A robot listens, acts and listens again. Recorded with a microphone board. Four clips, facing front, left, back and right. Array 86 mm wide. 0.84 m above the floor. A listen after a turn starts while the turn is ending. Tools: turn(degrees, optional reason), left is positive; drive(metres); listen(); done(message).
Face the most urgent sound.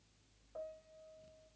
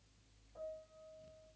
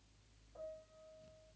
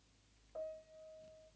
listen()
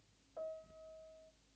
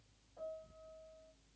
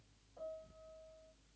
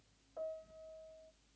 listen()
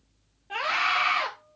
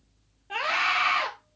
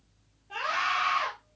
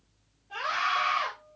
turn(degrees=55, reason="The scream: 55° left.")
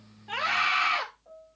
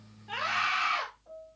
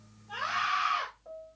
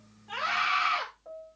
turn(degrees=-10, reason="The scream is now 10° right.")
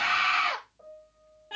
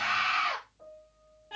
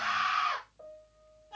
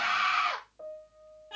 done("Facing the scream.")